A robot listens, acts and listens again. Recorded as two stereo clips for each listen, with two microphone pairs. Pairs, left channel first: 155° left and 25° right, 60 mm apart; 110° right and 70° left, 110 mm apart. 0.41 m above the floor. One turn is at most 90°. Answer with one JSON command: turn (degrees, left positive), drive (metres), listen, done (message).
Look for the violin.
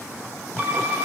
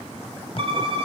{"turn": 35}
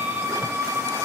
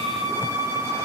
{"done": "Facing the violin, 2 to 4 m away."}